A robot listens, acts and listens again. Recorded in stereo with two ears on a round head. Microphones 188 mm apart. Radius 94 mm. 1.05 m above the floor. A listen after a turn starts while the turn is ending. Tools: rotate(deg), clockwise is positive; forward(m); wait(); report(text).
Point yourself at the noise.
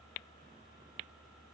wait()
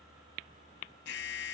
rotate(-60)
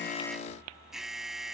report("Facing the alarm.")